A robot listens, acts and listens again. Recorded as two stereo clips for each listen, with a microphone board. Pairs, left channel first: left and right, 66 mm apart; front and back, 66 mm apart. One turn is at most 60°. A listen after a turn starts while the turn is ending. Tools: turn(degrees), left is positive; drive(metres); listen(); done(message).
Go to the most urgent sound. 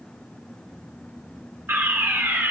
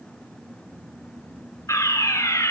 turn(degrees=-40)
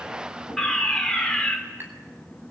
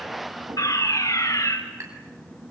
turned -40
drive(metres=1.0)
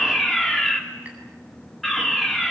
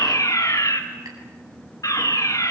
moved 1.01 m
drive(metres=1.0)
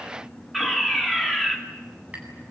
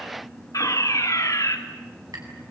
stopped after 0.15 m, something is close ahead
done("Blocked. The fire alarm is further on, straight ahead.")